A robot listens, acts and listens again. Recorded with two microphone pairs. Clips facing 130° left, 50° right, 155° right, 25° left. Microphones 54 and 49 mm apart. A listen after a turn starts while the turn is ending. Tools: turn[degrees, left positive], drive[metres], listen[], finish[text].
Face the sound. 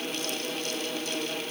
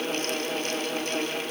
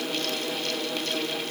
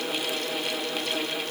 Action: listen[]
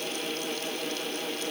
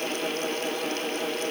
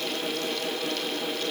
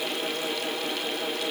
Action: listen[]
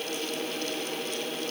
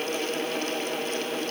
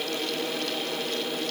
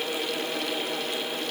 Action: finish[I can't make out anything to turn to.]